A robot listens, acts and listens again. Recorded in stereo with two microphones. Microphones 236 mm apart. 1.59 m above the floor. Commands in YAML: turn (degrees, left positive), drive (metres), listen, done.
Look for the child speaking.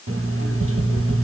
listen: true
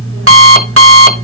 listen: true
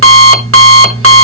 done: "I can't make out a child speaking to turn to."